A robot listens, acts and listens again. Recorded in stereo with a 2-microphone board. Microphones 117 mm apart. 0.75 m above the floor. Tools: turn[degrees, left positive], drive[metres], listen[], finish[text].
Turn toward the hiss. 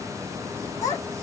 Action: listen[]
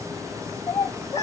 Action: listen[]
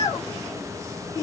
Action: finish[I can't make out a hiss to turn to.]